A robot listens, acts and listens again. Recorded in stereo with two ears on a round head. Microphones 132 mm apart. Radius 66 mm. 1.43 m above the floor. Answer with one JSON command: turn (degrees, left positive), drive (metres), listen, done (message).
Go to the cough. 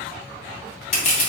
{"listen": true}
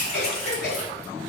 {"turn": 90}
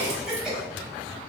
{"drive": 1.0}
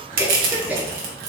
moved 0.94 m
{"turn": -10}
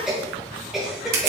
{"drive": 1.0}
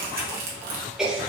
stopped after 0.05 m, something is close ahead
{"done": "I am next to the cough."}